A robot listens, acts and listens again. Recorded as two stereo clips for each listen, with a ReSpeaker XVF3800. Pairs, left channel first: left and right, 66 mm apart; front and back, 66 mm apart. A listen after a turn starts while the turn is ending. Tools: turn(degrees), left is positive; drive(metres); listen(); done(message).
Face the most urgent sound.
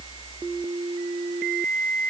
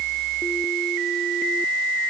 listen()
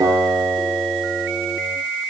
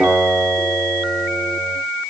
listen()
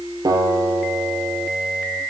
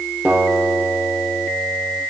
done("I can't make out anything urgent to turn to.")